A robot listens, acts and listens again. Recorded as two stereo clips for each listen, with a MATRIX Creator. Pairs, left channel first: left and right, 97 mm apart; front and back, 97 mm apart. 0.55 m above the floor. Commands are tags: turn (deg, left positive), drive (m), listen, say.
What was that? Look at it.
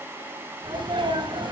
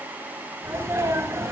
<turn deg="-120"/>
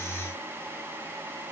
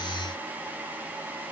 <say>I heard a sneeze from this way, but can't make it out now.</say>